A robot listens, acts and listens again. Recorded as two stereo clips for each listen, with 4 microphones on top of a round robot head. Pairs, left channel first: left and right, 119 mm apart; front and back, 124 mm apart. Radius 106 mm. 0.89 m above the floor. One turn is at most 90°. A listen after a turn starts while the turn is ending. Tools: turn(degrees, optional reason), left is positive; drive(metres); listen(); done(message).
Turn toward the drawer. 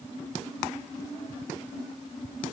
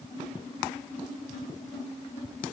listen()
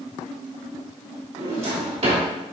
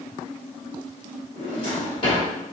turn(degrees=-60, reason="The drawer: 60° right.")
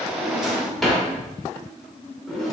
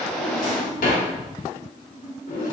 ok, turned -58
done("Facing the drawer, 1 to 2 m away.")